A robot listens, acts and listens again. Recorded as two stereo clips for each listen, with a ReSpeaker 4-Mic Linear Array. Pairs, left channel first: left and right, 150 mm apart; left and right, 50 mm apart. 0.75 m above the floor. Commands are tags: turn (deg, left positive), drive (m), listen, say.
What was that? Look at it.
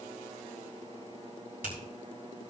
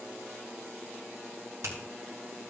<turn deg="-90"/>
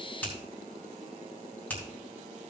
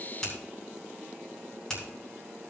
<turn deg="10"/>
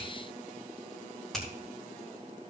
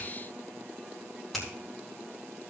<say>Facing the finger snap, over 4 m away.</say>